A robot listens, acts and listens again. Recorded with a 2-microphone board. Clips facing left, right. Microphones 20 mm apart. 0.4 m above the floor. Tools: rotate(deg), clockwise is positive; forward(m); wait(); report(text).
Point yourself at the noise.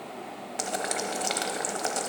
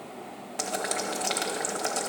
rotate(-30)
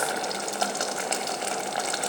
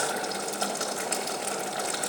rotate(-145)
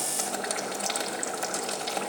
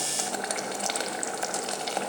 rotate(10)
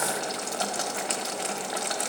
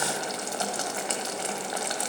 report("Facing the boiling.")